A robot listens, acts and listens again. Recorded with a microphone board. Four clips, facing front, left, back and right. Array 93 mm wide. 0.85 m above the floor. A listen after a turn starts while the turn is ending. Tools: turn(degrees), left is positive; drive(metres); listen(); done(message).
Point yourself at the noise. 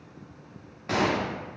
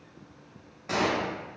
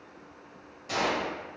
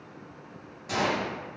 turn(degrees=20)
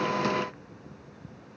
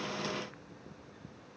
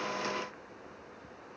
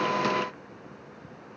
done("I heard a gunshot from this way, but can't make it out now.")